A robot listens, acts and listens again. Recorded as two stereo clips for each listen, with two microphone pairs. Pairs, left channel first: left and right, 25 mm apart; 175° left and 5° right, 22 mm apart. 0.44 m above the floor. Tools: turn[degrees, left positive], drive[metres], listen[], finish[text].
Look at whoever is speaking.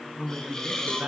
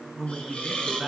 Thought: The man speaking: 115° right.
Action: turn[-115]
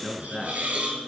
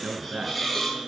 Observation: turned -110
Thought: The man speaking is now 10° right.
Action: turn[-10]
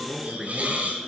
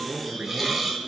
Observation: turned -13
Action: finish[Found it: a man speaking, straight ahead, over 4 m away.]